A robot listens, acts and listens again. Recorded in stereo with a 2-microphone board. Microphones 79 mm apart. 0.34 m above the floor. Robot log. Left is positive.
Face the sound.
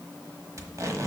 note: The tape being pulled: about 45° right or 135° right.
cmd yaw -45
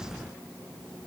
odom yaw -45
cmd idle
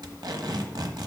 note: So it is at 85° right.
cmd yaw -85
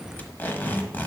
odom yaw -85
note: The tape being pulled is now 30° left.
cmd yaw +30
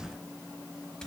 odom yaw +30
note: The tape being pulled is now 10° left.
cmd yaw +10
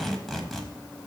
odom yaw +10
end: Found it: tape being pulled, straight ahead, 1 to 2 m away.